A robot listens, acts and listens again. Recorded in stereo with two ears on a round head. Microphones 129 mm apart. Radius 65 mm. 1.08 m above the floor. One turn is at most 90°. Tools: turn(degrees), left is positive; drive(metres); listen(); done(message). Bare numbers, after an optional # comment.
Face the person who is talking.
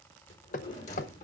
listen()
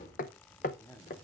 # The man speaking: about 20° left or 160° left.
turn(20)
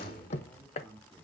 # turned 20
turn(30)
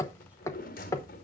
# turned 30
listen()
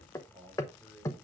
done("Facing the man speaking.")